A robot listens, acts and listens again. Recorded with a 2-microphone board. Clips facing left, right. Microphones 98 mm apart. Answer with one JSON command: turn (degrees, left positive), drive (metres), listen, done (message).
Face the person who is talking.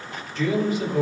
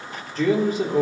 {"turn": -40}
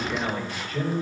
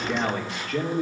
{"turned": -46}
{"turn": -95}
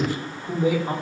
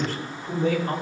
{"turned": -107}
{"turn": 15}
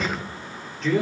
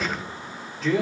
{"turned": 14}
{"done": "Facing the man speaking, 2 to 4 m away."}